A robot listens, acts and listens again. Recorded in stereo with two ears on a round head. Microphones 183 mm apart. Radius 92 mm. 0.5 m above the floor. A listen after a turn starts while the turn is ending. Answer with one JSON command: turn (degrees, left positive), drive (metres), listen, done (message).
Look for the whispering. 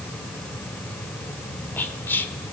{"turn": 30}
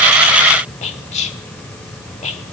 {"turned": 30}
{"turn": 140}
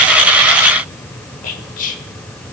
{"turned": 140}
{"turn": 45}
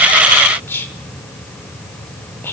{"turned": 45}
{"turn": 15}
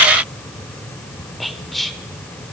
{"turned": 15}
{"done": "Found it: whispering, straight ahead."}